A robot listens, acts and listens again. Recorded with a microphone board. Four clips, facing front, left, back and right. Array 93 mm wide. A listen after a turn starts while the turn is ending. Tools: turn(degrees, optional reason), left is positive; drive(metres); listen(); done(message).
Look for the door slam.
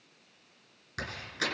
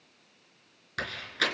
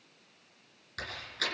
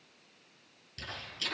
turn(degrees=75, reason="The door slam: 75° left.")
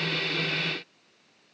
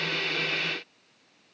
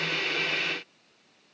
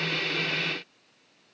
done("I heard a door slam from this way, but can't make it out now.")